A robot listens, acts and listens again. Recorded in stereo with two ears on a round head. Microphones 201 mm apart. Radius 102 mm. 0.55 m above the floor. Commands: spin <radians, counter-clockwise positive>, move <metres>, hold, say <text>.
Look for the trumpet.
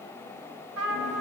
spin -1.13
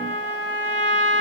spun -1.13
spin -0.87
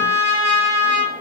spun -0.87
spin -0.17
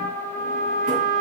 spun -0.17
say Found it: a trumpet, straight ahead, 2 to 4 m away.